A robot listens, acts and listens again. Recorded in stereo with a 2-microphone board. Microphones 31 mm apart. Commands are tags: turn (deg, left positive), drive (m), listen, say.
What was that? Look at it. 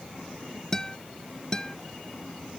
<turn deg="20"/>
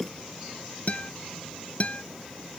<turn deg="135"/>
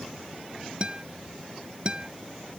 <turn deg="-25"/>
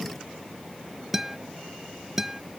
<turn deg="-10"/>
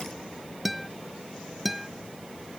<say>Found it: a guitar, straight ahead.</say>